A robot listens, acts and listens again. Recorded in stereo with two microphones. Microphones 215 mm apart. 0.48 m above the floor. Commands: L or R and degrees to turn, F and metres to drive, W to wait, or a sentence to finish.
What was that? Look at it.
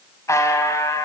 L30
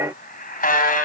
L135
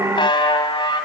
L25
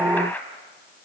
L10
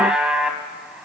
Facing the buzzer.